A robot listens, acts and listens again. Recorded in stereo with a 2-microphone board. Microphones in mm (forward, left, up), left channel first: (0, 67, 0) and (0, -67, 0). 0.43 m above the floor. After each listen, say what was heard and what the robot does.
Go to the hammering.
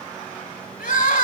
Keep listening.
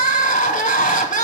Keep listening.
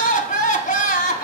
I can't make out hammering to turn to.